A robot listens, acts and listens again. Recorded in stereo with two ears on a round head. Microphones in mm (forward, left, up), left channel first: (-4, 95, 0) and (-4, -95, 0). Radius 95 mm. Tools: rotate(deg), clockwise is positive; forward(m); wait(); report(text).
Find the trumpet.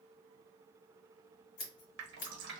wait()
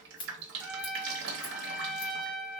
rotate(30)
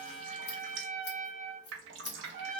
rotate(145)
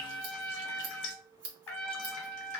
rotate(-10)
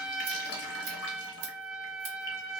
report("Found it: a trumpet, straight ahead, under 1 m away.")